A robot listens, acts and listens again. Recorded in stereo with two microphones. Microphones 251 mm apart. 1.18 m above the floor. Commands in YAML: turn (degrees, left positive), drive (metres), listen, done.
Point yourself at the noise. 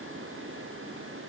listen: true
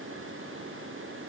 listen: true
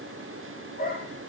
turn: 35
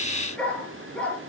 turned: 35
done: "Found it: a dog barking, straight ahead, over 4 m away."